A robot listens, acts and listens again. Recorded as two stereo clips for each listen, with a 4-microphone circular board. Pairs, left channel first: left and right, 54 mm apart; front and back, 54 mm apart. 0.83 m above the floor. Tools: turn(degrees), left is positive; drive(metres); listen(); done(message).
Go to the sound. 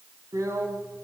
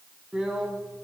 turn(degrees=-105)
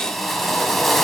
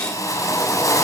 drive(metres=1.0)
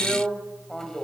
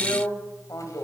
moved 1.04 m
turn(degrees=10)
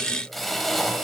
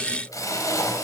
drive(metres=1.0)
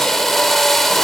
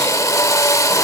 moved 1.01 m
drive(metres=1.0)
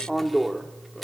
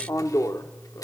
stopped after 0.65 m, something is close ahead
done("Arrived at the drill, straight ahead.")